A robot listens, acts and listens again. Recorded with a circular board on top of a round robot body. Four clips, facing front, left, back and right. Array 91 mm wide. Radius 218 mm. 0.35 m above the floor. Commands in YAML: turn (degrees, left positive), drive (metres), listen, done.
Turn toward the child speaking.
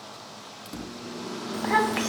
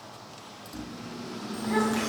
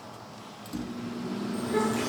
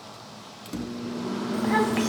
turn: -20
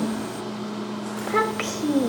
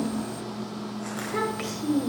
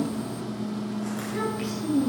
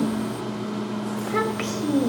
turn: -30
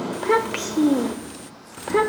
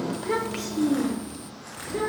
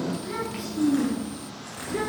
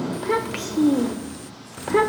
turn: -55
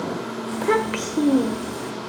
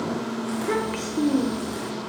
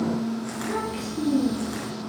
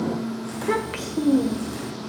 turn: -10
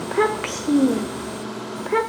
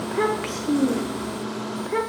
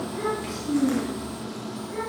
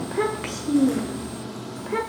done: "Facing the child speaking, 1 to 2 m away."